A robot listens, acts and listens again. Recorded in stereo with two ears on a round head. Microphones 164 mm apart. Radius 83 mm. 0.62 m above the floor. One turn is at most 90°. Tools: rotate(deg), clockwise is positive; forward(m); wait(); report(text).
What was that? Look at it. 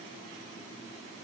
wait()
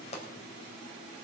rotate(-35)
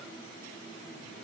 wait()
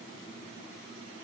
report("I heard a pop, but can't make it out now. It was about straight ahead or 110° left.")